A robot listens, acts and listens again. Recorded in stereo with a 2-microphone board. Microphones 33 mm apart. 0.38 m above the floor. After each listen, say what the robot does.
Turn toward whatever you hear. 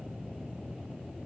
Keep listening.
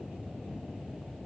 Keep listening.
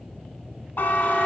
Turn 90° left.
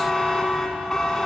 Turn 15° left.
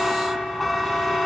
Found it: a buzzer, straight ahead, under 1 m away.